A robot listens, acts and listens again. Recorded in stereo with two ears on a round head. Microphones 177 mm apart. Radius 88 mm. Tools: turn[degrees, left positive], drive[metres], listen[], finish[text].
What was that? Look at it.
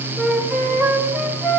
Action: turn[-30]
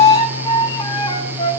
Thought: So it is at 25° left.
Action: turn[25]
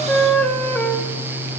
Thought: The flute is now 10° left.
Action: turn[10]
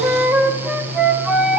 Action: finish[Found it: a flute, straight ahead, 1 to 2 m away.]